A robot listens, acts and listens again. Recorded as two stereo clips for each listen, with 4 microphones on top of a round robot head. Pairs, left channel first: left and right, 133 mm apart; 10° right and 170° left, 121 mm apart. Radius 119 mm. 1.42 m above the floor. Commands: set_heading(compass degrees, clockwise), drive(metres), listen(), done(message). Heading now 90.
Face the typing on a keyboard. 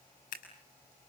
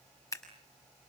listen()
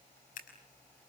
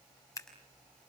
listen()
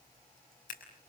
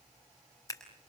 done("I can't make out typing on a keyboard, only scissors.")